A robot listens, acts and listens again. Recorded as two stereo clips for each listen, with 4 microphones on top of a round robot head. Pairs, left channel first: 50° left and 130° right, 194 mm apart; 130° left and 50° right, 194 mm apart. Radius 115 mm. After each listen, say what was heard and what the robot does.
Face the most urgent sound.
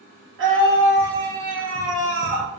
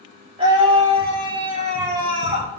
The scream: 115° right. Turn 115° right.
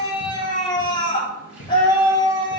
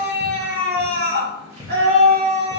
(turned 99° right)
The scream is now 15° right. Turn 15° right.
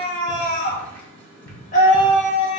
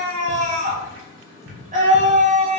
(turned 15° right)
Found it: a scream, straight ahead, 2 to 4 m away.